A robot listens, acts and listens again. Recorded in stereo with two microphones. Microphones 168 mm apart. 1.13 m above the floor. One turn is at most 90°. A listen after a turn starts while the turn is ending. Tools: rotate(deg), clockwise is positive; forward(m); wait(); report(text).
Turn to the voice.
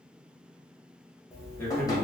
rotate(-30)
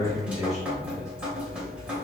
rotate(-90)
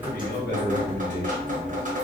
rotate(-90)
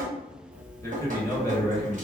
rotate(-20)
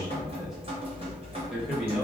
report("Found it: a man speaking, straight ahead, under 1 m away.")